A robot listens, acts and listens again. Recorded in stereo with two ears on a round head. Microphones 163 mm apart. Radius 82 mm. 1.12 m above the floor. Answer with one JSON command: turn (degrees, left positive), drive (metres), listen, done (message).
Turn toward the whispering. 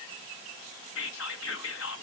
{"turn": 90}
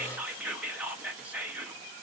{"done": "Found it: whispering, straight ahead, 1 to 2 m away."}